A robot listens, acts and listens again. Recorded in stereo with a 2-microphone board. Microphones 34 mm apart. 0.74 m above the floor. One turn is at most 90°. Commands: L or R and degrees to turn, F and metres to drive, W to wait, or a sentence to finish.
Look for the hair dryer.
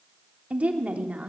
W
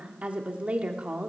W
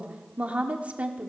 I can't make out a hair dryer, only a woman speaking.